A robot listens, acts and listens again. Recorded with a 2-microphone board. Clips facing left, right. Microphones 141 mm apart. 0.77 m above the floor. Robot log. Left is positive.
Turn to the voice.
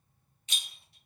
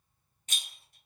cmd idle
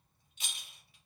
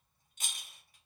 cmd idle
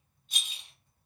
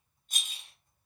end: I can't make out anyone speaking to turn to.